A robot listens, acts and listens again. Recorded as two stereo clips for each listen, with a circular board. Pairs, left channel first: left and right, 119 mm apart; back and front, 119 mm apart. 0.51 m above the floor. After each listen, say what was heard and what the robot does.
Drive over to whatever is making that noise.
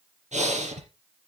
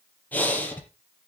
The breathing: 105° right. Turn 105° right.
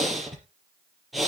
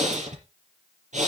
Drive 1.0 m forward.
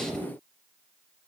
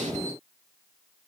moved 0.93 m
Keep listening.
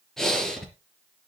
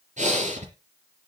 Drive 1.0 m forward.
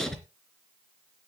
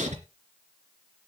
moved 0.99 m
Drive 1.0 m forward.
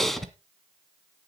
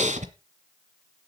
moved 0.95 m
Drive 1.0 m forward.
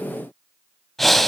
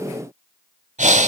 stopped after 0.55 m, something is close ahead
Arrived at the breathing, straight ahead.